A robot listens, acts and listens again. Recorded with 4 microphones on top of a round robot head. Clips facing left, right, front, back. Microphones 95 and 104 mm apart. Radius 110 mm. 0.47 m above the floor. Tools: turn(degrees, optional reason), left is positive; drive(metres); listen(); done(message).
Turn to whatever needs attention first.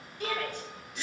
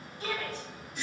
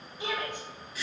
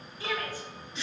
turn(degrees=70, reason="The shout: 70° left.")
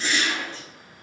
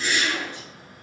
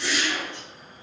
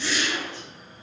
listen()
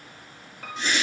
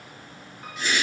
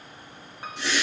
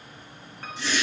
listen()
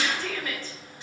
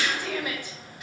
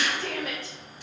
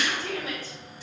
turn(degrees=-15, reason="The shout is now 15° right.")
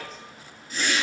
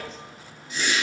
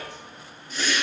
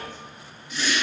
listen()
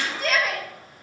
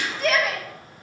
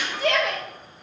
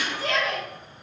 done("Facing the shout, 2 to 4 m away.")